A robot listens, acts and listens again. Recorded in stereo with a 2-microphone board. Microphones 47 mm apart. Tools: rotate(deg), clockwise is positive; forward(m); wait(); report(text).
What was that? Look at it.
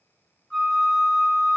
rotate(-30)
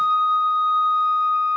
rotate(15)
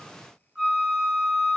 report("Facing the flute.")